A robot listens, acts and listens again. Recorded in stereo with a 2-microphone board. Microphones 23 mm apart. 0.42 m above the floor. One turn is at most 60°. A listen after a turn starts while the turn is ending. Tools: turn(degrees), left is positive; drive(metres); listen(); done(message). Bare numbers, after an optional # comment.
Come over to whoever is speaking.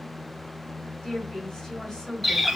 # The woman speaking: about 40° left or 140° left.
turn(40)
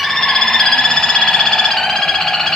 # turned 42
listen()
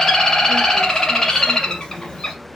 listen()
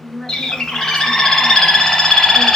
# So it is at 90° left.
turn(60)
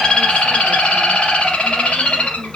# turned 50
# Nothing new. It was at 40° left.
turn(40)
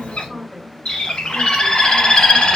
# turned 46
# The woman speaking is now 10° right.
turn(-10)
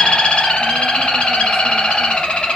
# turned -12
listen()
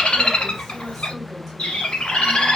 listen()
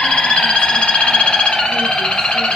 done("I heard a woman speaking from this way, but can't make it out now. I did not reach it.")